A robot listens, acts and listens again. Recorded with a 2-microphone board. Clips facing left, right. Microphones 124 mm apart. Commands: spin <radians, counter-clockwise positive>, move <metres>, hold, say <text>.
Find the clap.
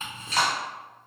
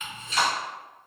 spin 1.57
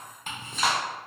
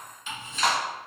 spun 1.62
say Found it: a clap, straight ahead.